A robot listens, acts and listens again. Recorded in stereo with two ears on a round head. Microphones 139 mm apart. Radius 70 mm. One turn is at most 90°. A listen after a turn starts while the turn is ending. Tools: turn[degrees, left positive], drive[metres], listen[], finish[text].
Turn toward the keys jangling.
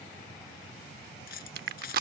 Thought: The keys jangling: about 70° left or 110° left.
Action: turn[70]
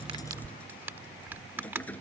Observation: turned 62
Thought: So it is at 10° left.
Action: turn[10]
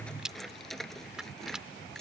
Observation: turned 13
Action: finish[Found it: keys jangling, straight ahead.]